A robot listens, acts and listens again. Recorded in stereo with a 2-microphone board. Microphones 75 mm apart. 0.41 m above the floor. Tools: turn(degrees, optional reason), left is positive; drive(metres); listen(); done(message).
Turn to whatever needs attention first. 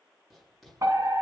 turn(degrees=-50, reason="The fire alarm: about 50° right or 130° right.")
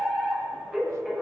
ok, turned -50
done("Found it: a fire alarm, straight ahead.")